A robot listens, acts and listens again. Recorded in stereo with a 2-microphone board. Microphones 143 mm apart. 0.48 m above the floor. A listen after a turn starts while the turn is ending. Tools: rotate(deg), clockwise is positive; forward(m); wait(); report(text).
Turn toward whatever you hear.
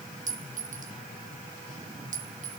rotate(60)
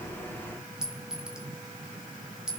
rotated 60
report("Facing the clink.")